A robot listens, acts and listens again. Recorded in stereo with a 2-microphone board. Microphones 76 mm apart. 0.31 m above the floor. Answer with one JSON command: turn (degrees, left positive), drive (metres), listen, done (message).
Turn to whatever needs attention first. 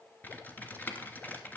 {"listen": true}
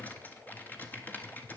{"listen": true}
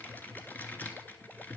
{"done": "I can't make out anything urgent to turn to."}